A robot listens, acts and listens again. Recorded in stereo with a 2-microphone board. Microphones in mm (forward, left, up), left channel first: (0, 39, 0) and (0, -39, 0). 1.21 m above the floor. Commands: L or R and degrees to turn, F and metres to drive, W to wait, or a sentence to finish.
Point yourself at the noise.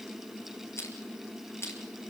L40
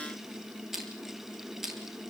Facing the crushing, over 4 m away.